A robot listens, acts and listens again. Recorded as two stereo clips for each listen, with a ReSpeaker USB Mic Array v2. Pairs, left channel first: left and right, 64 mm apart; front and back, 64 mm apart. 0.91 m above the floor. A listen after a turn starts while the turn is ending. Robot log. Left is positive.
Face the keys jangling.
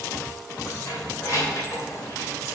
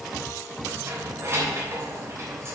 note: The keys jangling: 130° left.
cmd yaw +130
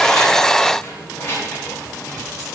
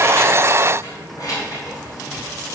note: The keys jangling is now 30° left.
cmd yaw +30
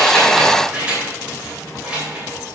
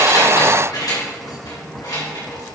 note: The keys jangling is now 15° right.
cmd yaw -15
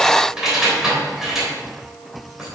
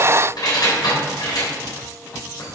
end: Found it: keys jangling, straight ahead, 2 to 4 m away.